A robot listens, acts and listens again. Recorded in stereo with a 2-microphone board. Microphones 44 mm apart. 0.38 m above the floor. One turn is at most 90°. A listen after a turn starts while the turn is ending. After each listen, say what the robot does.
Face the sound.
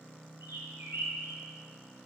Turn 90° right.
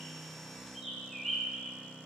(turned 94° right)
Facing the bird.